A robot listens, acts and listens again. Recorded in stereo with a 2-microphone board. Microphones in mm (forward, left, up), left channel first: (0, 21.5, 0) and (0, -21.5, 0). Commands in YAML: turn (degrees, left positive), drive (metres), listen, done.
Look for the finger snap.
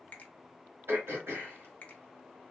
turn: 35
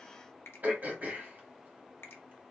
turn: 110
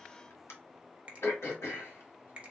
turn: -30
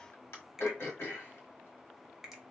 turn: -10
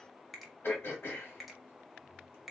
done: "Found it: a finger snap, straight ahead."